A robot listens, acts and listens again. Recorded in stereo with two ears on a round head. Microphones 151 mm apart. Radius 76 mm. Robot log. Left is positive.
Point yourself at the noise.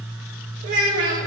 note: The child speaking: about 70° right or 110° right.
cmd yaw -70
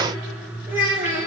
note: So it is at 50° right.
cmd yaw -50
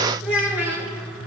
note: The child speaking is now 10° right.
cmd yaw -10
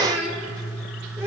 note: The child speaking is now 15° right.
cmd yaw -15
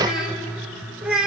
end: Facing the child speaking.